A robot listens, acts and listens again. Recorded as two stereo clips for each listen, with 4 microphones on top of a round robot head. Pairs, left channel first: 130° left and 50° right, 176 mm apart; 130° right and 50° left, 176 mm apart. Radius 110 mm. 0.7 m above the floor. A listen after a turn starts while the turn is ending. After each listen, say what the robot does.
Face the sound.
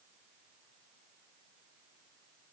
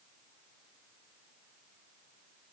Keep listening.
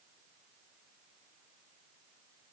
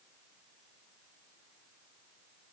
Keep listening.
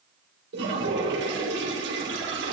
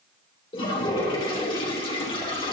Turn 70° right.
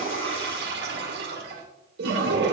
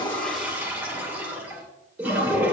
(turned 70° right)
Turn 30° right.
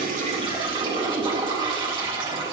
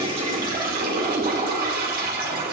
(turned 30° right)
Turn 15° left.
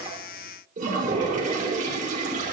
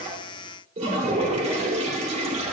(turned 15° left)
Found it: a toilet flushing, straight ahead.